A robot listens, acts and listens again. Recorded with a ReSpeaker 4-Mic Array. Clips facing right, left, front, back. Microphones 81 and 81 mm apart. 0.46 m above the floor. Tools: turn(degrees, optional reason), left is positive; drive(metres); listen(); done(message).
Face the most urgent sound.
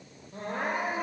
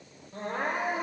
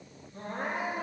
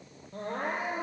turn(degrees=-175, reason="The crying: 175° right.")
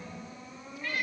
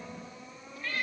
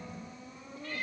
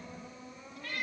done("Facing the crying.")